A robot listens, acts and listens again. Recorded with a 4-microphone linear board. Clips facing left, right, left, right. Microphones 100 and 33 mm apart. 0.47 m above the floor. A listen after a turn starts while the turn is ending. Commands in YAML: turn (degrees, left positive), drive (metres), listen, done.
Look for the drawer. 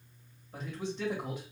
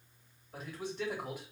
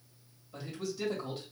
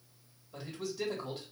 listen: true
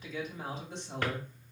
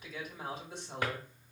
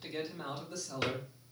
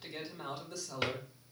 turn: -30
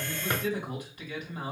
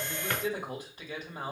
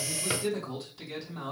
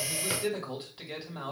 listen: true
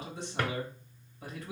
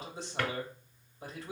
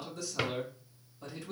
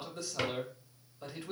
turn: 15
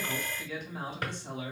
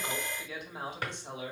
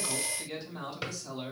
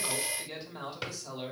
done: "Facing the drawer, under 1 m away."